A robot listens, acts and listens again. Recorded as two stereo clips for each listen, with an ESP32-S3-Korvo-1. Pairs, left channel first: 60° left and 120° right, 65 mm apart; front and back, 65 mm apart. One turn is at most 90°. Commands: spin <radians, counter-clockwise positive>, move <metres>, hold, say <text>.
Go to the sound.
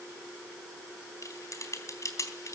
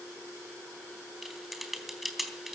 spin 1.57
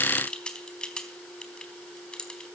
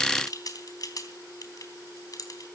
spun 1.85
spin -0.26
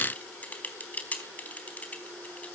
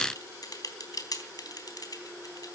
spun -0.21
move 1.0
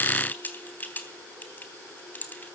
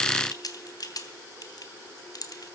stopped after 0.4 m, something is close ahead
say Blocked. The typing on a keyboard is further on, straight ahead.